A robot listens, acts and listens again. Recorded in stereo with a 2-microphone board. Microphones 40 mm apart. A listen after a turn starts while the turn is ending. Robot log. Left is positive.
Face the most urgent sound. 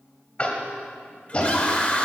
note: The scream: about 30° left or 150° left.
cmd yaw +30
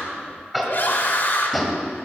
note: So it is at 115° left.
cmd yaw +115
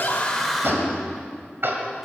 end: Facing the scream.